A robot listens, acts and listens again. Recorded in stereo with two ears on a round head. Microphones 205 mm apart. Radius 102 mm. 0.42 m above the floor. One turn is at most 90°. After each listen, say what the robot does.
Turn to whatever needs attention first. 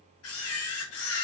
Keep listening.
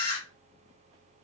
Keep listening.
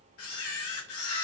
I can't make out anything urgent, only a camera shutter.